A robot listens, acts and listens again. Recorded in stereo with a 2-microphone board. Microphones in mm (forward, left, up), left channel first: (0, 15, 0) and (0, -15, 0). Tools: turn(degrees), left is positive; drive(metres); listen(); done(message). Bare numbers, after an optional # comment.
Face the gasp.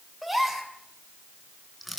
turn(-30)
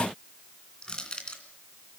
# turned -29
listen()
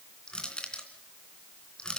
done("I heard a gasp, but can't make it out now. It was about 20° left or 145° right.")